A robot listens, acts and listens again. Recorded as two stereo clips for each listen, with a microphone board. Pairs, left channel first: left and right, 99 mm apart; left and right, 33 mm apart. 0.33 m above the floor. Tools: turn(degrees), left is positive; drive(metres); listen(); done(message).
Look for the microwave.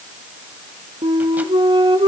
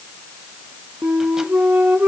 listen()
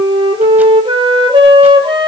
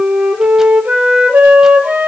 listen()
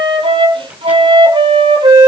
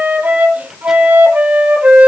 done("I can't make out a microwave, only a flute.")